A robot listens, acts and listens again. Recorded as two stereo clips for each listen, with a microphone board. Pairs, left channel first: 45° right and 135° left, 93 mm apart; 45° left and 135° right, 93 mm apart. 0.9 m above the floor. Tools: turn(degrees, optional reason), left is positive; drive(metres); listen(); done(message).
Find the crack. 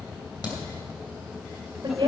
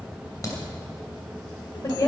turn(degrees=-10, reason="The crack: 10° right.")
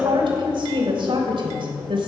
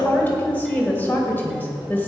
done("I heard a crack from this way, but can't make it out now.")